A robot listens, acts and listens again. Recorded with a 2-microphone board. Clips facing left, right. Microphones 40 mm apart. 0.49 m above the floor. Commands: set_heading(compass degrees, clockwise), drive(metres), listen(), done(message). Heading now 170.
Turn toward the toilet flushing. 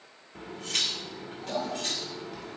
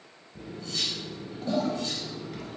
set_heading(230)
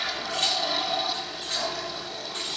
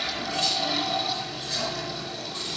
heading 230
done("Found it: a toilet flushing, straight ahead.")